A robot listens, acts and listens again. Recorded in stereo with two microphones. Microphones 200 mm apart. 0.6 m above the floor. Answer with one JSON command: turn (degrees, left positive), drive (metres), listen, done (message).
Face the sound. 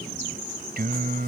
{"turn": -45}
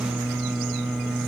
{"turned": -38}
{"done": "Facing the singing."}